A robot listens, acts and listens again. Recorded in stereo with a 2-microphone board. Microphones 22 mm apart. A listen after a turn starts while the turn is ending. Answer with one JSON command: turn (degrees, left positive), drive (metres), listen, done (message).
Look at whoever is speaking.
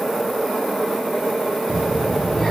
{"turn": 35}
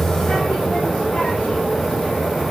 {"turn": 110}
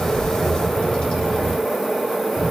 {"turn": 35}
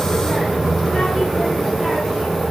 {"done": "Found it: a child speaking, straight ahead, 2 to 4 m away."}